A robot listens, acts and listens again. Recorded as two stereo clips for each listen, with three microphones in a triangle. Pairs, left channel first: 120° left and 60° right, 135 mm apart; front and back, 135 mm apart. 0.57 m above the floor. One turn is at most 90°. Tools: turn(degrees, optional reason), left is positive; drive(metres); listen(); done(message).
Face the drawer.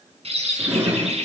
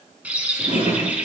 turn(degrees=-90, reason="The drawer: 140° right.")
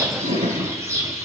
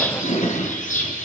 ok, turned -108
turn(degrees=-30, reason="The drawer is now 30° right.")
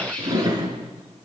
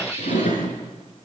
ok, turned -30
done("Facing the drawer.")